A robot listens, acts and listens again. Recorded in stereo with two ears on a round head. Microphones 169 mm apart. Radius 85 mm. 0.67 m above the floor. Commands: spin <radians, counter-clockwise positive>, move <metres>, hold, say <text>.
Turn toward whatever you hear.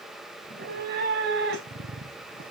spin -1.22
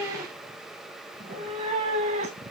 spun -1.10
spin -0.70
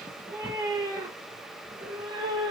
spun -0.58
spin -0.35
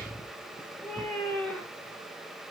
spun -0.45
say Facing the cat meowing.